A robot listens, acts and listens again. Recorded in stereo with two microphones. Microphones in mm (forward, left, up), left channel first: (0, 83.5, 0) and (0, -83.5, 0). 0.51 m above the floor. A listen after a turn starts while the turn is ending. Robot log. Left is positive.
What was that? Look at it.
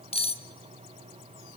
note: The cutlery clinking: about 35° left or 145° left.
cmd yaw +35
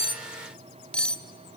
end: Facing the cutlery clinking.